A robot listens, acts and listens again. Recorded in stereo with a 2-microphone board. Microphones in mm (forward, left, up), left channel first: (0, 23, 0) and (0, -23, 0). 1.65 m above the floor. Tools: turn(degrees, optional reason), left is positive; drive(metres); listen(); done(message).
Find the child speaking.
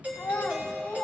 turn(degrees=50, reason="The child speaking: about 50° left or 130° left.")
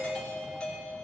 listen()
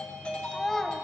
turn(degrees=10, reason="So it is at 10° left.")
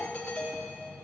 listen()
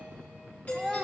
done("Facing the child speaking.")